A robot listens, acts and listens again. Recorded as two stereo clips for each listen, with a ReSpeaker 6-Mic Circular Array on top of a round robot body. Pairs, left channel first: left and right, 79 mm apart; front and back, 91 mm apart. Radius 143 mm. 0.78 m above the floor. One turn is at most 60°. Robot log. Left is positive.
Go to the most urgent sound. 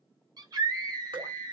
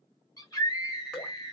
note: The scream: 50° right.
cmd yaw -50
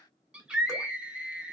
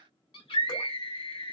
note: The scream is now 10° right.
cmd yaw -10
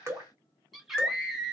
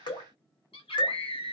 cmd fwd 1.0
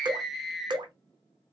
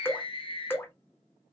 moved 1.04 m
cmd fwd 1.0
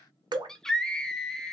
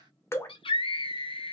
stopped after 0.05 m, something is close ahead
note: The scream is now 10° left.
cmd yaw +10
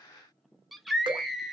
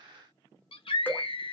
end: Arrived at the scream, straight ahead.